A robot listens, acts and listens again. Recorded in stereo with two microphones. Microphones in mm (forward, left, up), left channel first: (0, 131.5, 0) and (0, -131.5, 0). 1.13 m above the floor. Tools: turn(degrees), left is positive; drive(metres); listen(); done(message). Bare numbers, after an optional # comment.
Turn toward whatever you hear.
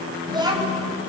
turn(-30)
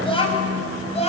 # So it is at 25° left.
turn(25)
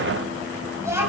# The child speaking is now 10° right.
turn(-10)
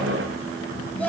done("Facing the child speaking.")